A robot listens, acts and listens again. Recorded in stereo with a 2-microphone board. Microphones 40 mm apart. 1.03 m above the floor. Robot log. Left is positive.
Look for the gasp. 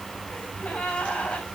note: The gasp: about 40° left or 140° left.
cmd yaw +40
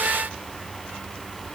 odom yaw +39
cmd idle
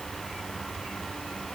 end: I heard a gasp, but can't make it out now. It was about straight ahead or 105° left.